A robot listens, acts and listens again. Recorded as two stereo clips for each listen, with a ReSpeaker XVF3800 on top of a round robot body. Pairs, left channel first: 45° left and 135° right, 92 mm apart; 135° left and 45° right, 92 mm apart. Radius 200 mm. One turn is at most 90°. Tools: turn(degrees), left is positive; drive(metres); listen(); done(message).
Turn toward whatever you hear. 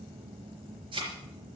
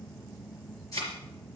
turn(degrees=-90)
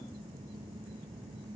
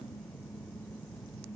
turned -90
turn(degrees=-80)
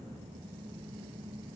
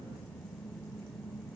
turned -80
done("I heard a thud from this way, but can't make it out now.")